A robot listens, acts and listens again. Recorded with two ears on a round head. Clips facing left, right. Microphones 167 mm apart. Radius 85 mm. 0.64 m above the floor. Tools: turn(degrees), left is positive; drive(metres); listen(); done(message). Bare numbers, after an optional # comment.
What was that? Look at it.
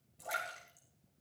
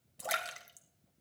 turn(-90)
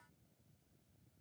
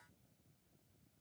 done("Facing where the splash came from. I can't hear it now.")